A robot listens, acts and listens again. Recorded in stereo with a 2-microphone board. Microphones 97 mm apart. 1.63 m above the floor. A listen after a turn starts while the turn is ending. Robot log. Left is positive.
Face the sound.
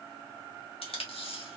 note: The tape being pulled: about 75° left or 105° left.
cmd yaw +75
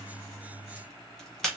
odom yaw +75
end: Found it: tape being pulled, straight ahead.